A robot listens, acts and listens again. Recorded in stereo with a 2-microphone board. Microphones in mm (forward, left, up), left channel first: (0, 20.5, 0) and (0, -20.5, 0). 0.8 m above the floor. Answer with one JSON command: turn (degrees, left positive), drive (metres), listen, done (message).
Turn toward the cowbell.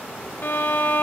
{"listen": true}
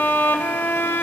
{"listen": true}
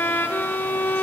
{"done": "I can't make out a cowbell to turn to."}